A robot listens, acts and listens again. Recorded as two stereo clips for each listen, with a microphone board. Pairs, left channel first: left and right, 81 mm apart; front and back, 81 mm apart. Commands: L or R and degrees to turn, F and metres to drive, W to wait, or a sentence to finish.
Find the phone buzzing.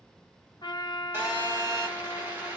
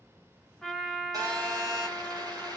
R155
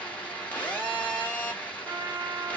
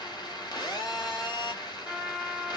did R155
L20
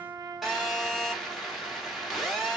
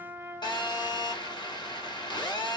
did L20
Found it: a phone buzzing, straight ahead, 2 to 4 m away.